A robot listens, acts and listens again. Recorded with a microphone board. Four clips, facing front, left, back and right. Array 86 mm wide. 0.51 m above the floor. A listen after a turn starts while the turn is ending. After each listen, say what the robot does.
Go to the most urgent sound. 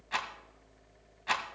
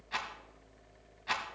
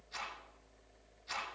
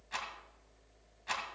Keep listening.
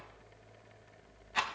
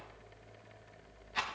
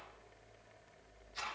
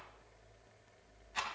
Keep listening.
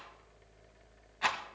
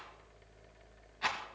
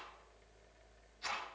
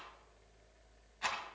I can't make out anything urgent, only a rattle.